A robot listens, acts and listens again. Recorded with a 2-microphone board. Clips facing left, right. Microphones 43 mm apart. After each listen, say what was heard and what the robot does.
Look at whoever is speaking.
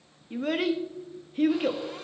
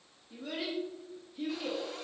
The child speaking: about 60° left or 120° left. Turn 60° left.
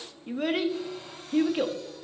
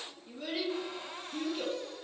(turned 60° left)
So it is at 60° left. Turn 60° left.
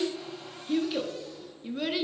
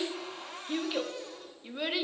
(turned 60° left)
The child speaking is now 10° right. Turn 10° right.
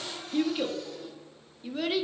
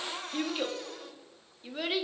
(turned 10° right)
Facing the child speaking, 1 to 2 m away.